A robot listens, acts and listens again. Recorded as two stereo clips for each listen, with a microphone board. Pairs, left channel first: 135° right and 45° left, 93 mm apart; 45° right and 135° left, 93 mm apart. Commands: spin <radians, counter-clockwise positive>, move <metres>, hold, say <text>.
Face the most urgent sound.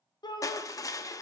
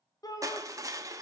spin -1.66
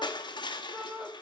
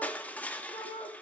spin -0.52
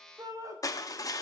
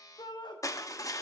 say Facing the shout, 1 to 2 m away.